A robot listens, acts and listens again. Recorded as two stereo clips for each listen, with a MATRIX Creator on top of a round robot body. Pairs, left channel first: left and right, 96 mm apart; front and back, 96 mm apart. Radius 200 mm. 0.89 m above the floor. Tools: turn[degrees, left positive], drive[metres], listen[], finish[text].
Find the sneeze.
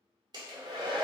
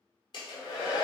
Action: listen[]
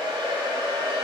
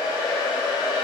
Action: listen[]
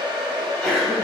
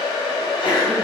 Action: finish[Facing the sneeze, 1 to 2 m away.]